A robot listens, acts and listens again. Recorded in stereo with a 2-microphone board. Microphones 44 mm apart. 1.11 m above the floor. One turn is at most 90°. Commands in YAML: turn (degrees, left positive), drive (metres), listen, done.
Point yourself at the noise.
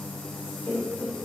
turn: 70
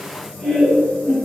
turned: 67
done: "Found it: laughter, straight ahead."